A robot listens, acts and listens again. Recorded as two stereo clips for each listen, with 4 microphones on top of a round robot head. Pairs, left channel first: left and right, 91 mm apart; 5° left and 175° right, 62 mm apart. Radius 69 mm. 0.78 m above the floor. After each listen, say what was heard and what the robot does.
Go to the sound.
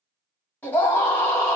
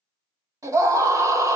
The scream: 165° left. Turn 165° left.
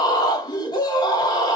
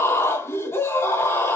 The scream is now 55° left. Turn 55° left.
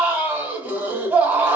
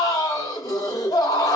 The scream is now 15° right. Turn 15° right.
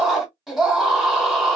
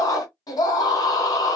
Drive 1.0 m forward.
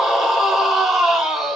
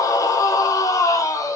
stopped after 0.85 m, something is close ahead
Arrived at the scream, straight ahead.